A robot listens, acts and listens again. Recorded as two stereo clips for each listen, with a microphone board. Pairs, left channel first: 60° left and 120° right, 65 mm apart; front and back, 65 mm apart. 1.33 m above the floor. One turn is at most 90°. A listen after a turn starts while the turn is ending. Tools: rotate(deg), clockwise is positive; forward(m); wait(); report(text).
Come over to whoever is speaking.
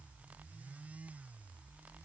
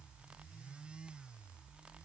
wait()
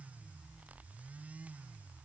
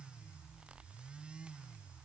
wait()
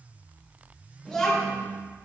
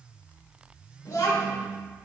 rotate(25)
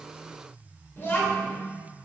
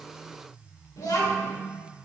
rotate(-10)
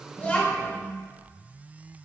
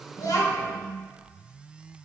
forward(1.0)
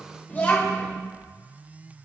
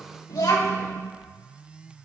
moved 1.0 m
forward(1.0)
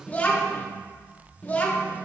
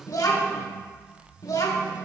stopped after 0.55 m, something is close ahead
report("Arrived at the child speaking, straight ahead.")